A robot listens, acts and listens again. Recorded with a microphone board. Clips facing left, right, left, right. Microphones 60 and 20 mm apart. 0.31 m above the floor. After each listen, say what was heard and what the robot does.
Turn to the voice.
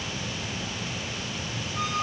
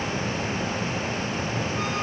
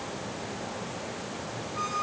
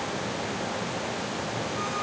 Keep listening.
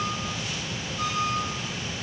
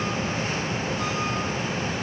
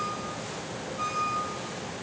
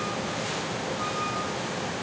Keep listening.
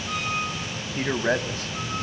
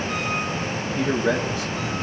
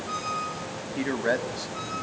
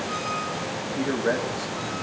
The man speaking: about 40° left or 140° left. Turn 40° left.
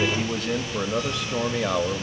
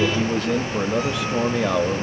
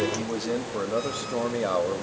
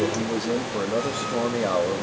Facing the man speaking, 1 to 2 m away.